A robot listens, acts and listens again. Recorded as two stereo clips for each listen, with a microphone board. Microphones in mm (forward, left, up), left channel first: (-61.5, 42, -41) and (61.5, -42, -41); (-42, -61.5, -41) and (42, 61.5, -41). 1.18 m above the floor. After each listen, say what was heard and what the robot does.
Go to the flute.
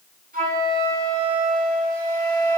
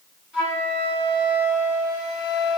The flute: 30° right. Turn 30° right.
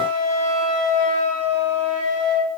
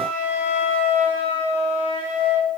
Drive 1.0 m forward.
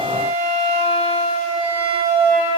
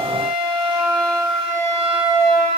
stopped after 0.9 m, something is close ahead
Arrived at the flute, straight ahead.